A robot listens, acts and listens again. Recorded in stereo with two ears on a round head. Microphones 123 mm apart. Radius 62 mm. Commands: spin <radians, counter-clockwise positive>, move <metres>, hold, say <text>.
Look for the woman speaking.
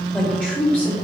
spin 0.52
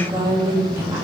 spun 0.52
spin -0.35
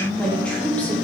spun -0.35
spin 0.17
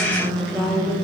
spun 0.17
spin 0.17
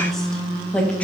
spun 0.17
spin 0.17
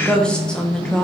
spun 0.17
say Found it: a woman speaking, straight ahead.